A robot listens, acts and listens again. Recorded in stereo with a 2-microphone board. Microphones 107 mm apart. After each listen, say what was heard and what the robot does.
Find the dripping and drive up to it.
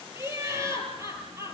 Keep listening.
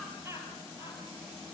Keep listening.
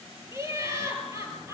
I can't make out dripping, only laughter.